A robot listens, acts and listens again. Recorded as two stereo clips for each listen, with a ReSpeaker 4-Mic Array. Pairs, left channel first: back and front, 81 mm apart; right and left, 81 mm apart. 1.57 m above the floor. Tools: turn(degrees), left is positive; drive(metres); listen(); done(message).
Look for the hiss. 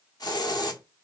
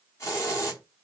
turn(degrees=-145)
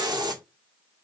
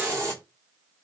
turn(degrees=35)
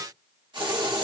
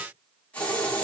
turn(degrees=-15)
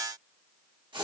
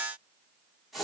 done("Facing the hiss, 1 to 2 m away.")